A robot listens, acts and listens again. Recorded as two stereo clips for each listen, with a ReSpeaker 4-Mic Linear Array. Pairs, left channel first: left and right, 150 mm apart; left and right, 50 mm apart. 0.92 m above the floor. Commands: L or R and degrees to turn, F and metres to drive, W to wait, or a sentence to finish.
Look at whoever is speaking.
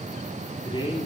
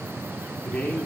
L30
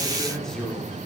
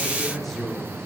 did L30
Facing the man speaking.